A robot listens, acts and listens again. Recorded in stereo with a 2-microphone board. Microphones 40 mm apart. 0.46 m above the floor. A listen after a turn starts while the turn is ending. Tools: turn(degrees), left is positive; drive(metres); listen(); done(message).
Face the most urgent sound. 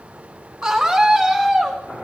turn(degrees=-30)
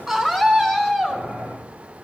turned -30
turn(degrees=15)
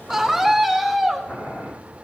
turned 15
done("Found it: a scream, straight ahead.")